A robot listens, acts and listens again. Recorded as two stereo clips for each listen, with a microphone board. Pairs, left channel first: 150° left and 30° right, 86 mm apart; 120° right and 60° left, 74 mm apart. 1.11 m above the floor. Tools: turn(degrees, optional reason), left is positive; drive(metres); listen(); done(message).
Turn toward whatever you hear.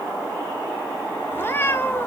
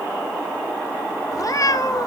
turn(degrees=-150, reason="The cat meowing: 150° right.")
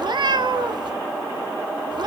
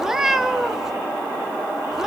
turn(degrees=-25, reason="The cat meowing is now 25° right.")
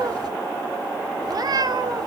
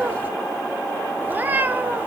done("Facing the cat meowing.")